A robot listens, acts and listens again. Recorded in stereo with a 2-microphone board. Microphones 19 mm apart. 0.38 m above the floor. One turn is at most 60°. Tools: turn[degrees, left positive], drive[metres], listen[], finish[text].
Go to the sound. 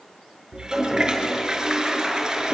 Thought: The toilet flushing: about 35° right or 145° right.
Action: turn[-35]
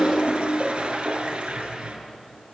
Thought: So it is at 110° right.
Action: turn[-60]
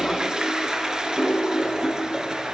Thought: The toilet flushing is now 40° right.
Action: turn[-40]
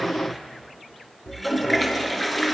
Action: drive[1.0]
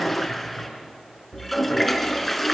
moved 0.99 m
Action: drive[1.0]
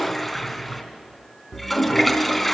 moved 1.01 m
Action: drive[1.0]
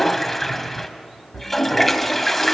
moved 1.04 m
Thought: The toilet flushing is now 10° left.
Action: turn[10]
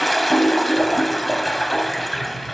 Action: drive[1.0]
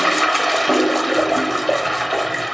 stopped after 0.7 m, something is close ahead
Action: finish[I am next to the toilet flushing.]